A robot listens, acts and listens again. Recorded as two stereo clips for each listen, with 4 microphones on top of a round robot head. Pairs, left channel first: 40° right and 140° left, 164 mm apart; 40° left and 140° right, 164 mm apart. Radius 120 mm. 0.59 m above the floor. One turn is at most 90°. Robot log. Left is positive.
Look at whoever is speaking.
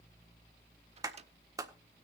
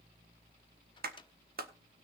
cmd idle
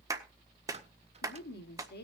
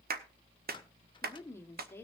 note: The woman speaking: 35° right.
cmd yaw -35
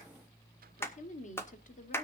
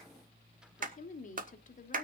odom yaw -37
end: Facing the woman speaking.